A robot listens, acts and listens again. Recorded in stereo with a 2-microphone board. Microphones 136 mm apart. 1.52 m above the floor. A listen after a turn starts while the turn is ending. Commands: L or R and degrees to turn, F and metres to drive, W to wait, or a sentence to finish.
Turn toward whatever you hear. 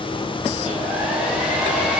R30
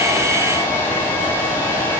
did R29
L20
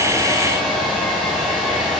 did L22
Facing the hair dryer, 2 to 4 m away.